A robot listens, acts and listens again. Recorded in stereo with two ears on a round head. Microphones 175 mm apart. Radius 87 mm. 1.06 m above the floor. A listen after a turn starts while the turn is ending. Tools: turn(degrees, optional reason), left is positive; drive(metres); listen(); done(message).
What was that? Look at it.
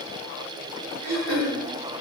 turn(degrees=-90)
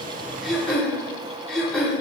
done("Found it: throat clearing, straight ahead, 2 to 4 m away.")